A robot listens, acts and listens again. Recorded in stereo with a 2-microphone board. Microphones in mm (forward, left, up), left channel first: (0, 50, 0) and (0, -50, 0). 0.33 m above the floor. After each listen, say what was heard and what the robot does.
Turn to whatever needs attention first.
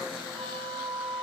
Keep listening.
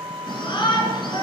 The shout: about 55° left or 125° left. Turn 55° left.
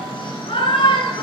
So it is at 70° left. Turn 70° left.
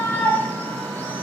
The shout is now 20° left. Turn 20° left.
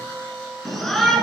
Found it: a shout, straight ahead.